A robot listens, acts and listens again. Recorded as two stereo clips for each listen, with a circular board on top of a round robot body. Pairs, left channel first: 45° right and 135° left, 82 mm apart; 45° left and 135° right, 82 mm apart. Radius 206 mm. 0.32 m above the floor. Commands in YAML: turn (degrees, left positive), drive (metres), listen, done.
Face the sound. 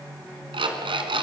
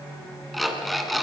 turn: 135
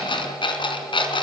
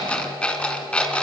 turn: -35
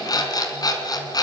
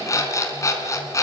done: "Facing the alarm clock."